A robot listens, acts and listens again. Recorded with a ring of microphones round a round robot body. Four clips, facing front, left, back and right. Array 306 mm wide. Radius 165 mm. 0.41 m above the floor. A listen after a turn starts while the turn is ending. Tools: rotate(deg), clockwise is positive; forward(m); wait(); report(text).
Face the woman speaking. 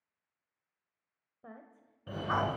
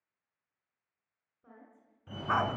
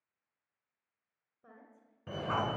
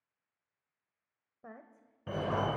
rotate(55)
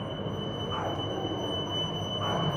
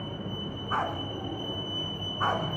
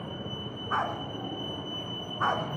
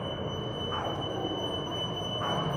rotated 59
wait()
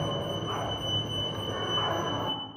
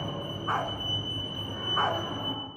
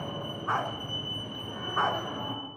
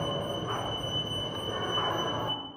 wait()
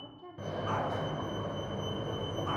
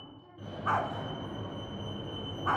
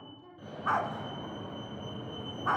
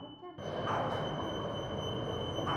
rotate(60)
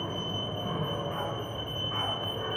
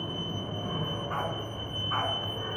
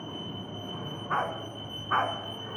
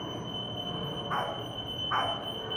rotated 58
wait()
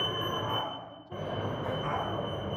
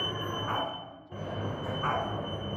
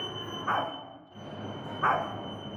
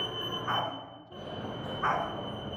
wait()
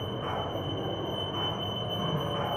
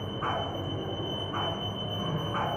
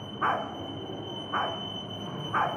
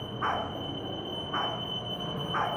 report("Facing where the woman speaking came from. I can't hear it now.")